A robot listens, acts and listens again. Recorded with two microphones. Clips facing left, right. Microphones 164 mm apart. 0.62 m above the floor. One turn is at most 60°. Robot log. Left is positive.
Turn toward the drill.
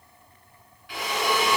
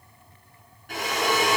note: The drill: about 45° right or 135° right.
cmd yaw -45
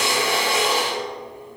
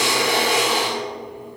note: So it is at 85° right.
cmd yaw -60
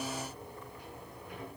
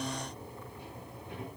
note: Nothing new. It was at 25° right.
cmd yaw -25
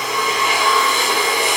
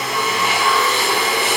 end: Facing the drill.